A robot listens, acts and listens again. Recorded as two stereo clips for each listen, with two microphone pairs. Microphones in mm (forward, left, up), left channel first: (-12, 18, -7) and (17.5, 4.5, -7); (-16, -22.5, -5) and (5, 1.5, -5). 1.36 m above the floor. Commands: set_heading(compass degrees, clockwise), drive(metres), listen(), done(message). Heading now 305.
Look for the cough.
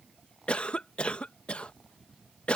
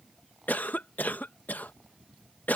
set_heading(95)
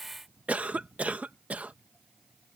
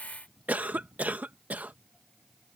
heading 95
set_heading(75)
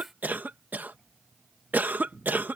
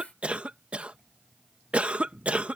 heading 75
done("Facing the cough.")